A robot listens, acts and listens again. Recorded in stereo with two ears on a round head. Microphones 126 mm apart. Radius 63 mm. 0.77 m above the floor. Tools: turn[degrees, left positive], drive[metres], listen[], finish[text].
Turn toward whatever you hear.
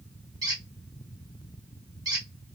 Thought: The squeak: about 30° right or 150° right.
Action: turn[-30]
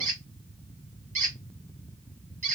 Thought: So it is at 120° right.
Action: turn[-120]
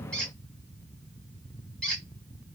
Action: finish[Facing the squeak.]